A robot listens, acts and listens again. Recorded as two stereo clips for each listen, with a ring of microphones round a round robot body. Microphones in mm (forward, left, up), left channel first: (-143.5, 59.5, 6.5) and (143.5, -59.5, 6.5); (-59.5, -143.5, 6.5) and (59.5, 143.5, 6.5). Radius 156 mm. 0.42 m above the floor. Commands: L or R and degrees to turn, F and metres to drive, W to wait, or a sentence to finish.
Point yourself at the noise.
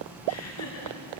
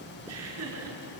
L115
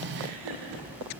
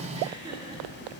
R10
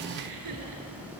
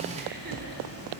W
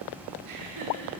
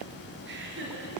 L10
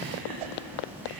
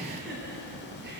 W
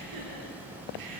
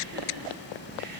W
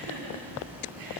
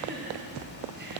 Facing the laughter.